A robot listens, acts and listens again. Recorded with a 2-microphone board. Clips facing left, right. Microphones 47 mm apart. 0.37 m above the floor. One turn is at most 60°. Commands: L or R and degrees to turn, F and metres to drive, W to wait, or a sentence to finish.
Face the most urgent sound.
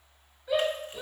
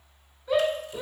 L30
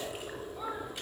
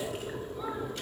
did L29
W
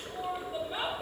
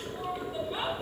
L60
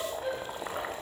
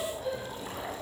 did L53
L60
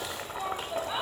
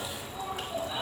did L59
L35
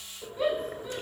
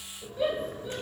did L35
Facing the shout.